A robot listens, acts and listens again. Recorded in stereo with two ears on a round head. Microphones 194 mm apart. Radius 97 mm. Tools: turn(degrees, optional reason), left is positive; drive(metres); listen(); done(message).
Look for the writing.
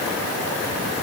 listen()
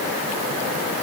listen()
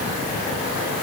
done("I can't make out writing.")